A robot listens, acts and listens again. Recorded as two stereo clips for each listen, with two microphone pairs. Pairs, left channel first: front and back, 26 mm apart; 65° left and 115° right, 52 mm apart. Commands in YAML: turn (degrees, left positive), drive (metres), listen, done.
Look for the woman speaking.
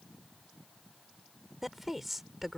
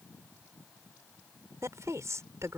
turn: -100
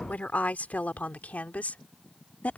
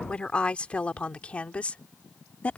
done: "Found it: a woman speaking, straight ahead."